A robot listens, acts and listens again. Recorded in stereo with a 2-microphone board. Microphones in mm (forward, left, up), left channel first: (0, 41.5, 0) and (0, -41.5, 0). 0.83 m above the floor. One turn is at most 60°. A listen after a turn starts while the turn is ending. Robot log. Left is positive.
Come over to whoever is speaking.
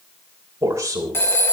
note: The man speaking: about 35° right or 145° right.
cmd yaw -35
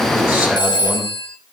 cmd idle
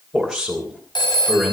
cmd fwd 1.0
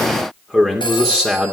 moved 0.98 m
cmd fwd 1.0
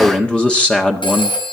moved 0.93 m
note: The man speaking is now 15° left.
cmd yaw +15
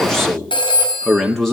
cmd fwd 1.0
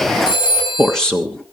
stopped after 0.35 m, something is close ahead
note: The man speaking is now 10° left.
cmd yaw +10
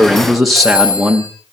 end: Arrived at the man speaking, straight ahead.